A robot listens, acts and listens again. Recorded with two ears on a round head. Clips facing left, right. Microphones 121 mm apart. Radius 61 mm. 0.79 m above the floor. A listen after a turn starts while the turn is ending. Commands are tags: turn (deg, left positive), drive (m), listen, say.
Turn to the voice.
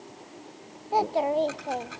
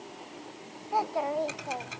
<turn deg="30"/>
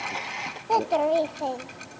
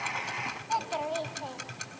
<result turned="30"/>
<turn deg="120"/>
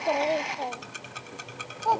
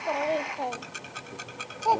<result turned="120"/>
<turn deg="-10"/>
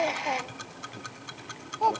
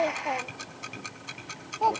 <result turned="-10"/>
<say>Found it: a child speaking, straight ahead.</say>